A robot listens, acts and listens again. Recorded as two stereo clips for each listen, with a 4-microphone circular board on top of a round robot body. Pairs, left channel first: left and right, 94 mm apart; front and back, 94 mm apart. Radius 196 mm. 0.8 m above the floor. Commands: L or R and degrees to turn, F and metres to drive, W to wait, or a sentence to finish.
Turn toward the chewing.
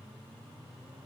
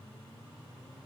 W
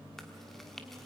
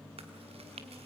L175
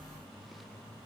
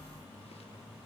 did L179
W
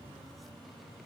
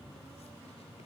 W
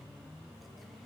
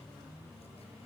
Facing where the chewing came from. I can't hear it now.